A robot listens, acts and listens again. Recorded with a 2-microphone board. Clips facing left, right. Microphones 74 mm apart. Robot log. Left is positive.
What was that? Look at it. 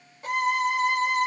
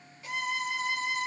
note: The violin: about 50° left or 130° left.
cmd yaw +50
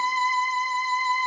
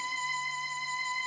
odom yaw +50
note: So it is at 70° left.
cmd yaw +70
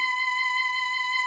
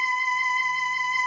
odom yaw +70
note: The violin is now 15° right.
cmd yaw -15
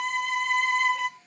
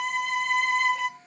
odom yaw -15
end: Facing the violin, 1 to 2 m away.